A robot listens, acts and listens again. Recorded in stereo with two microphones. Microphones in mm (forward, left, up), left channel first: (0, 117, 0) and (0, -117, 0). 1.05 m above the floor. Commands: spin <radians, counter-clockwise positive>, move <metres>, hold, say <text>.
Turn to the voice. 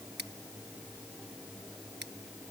hold
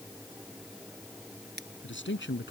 spin 1.05
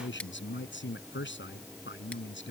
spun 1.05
spin 1.05
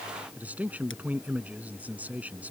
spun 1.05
say Facing the man speaking.